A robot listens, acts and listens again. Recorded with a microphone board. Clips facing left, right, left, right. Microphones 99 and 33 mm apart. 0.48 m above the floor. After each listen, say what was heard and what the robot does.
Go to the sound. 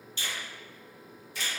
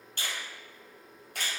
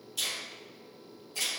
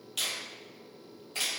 The finger snap: about 65° right or 115° right. Turn 65° right.
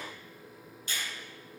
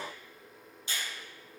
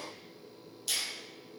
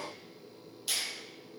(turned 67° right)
So it is at 25° right. Turn 25° right.
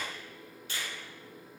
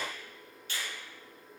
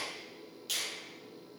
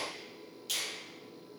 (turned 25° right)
Drive 1.0 m forward.
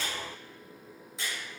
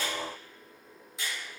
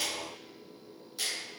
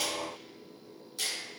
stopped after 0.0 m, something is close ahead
Something is in my way. I am facing the finger snap but have not reached it.